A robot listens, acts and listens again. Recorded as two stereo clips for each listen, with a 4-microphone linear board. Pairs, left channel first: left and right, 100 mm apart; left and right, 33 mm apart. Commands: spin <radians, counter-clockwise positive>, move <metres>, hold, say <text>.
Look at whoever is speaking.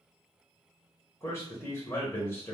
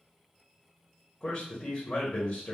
spin 0.44
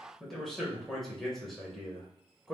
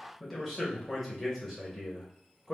say Found it: a man speaking, straight ahead, under 1 m away.